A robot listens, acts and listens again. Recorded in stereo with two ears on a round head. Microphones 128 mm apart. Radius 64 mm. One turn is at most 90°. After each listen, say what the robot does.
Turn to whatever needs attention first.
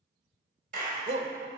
Turn 55° right.
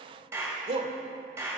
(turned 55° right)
Turn 50° right.
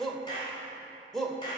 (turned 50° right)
Found it: a shout, straight ahead, 1 to 2 m away.